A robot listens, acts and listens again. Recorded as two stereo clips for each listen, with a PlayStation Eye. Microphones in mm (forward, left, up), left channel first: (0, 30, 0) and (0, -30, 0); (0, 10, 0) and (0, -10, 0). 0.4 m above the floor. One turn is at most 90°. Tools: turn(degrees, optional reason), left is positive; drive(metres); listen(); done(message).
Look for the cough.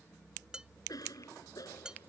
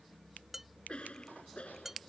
turn(degrees=90)
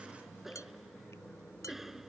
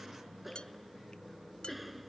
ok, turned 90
done("Found it: a cough, straight ahead.")